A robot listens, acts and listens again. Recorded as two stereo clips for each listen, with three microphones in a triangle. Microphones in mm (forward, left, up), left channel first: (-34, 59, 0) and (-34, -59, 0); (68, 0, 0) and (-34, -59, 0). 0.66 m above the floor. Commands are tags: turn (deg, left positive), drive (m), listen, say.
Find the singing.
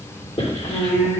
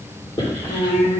<turn deg="20"/>
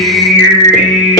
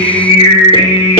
<turn deg="-10"/>
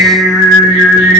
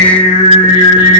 <turn deg="-10"/>
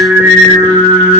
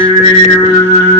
<turn deg="-15"/>
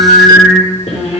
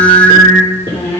<say>Facing the singing.</say>